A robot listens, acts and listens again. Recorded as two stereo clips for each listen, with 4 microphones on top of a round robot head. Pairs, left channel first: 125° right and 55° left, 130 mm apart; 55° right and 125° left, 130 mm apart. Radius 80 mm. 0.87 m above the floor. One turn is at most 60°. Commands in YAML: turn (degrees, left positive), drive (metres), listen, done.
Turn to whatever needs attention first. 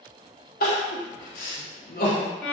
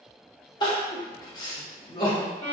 turn: -60
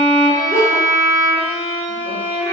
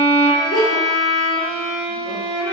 turn: -55
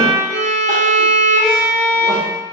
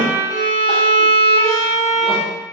listen: true
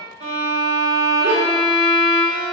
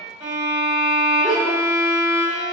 listen: true
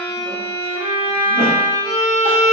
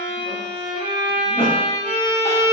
done: "I heard crying from this way, but can't make it out now."